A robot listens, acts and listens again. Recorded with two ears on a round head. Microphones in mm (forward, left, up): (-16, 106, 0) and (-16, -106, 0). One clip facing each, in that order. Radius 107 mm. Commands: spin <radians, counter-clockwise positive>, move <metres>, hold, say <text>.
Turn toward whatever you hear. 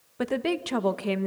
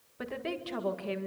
spin 1.13
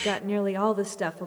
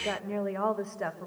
spin 0.79
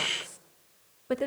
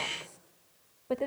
spin 0.35
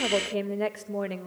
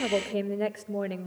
say Facing the woman speaking.